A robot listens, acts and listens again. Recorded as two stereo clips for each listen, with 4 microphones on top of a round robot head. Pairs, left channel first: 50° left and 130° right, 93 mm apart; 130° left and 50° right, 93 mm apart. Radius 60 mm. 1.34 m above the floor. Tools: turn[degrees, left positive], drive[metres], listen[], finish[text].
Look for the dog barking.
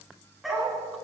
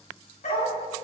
Thought: The dog barking: 140° left.
Action: turn[140]
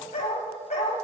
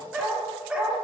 Thought: The dog barking is now 35° left.
Action: turn[35]
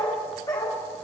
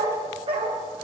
Thought: The dog barking is now 10° right.
Action: turn[-10]
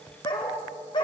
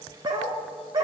Action: finish[Facing the dog barking, 1 to 2 m away.]